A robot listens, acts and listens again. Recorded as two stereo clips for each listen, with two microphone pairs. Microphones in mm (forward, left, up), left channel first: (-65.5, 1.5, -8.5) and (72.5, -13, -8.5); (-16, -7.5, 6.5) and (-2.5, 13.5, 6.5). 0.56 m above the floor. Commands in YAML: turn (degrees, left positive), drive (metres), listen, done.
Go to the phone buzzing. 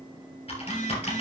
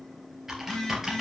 turn: 170
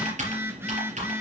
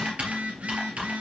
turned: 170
turn: 65
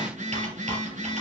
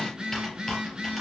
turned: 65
drive: 1.0
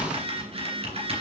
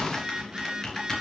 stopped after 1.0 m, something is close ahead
done: "I am next to the phone buzzing."